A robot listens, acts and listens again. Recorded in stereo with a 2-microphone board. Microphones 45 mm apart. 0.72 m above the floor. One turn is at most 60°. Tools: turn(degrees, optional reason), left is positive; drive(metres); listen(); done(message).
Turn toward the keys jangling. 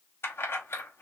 turn(degrees=55, reason="The keys jangling: about 55° left or 125° left.")
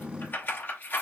turn(degrees=50, reason="So it is at 50° left.")
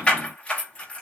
turn(degrees=25, reason="The keys jangling is now 25° left.")
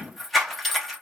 done("Found it: keys jangling, straight ahead.")